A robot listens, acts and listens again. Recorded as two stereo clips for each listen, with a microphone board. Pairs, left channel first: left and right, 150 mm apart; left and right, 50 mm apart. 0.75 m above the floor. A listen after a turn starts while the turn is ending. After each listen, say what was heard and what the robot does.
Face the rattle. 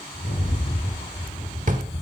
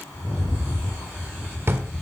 The rattle: about 70° left or 110° left. Turn 70° left.
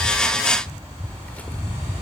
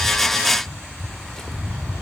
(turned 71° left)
Facing the rattle, over 4 m away.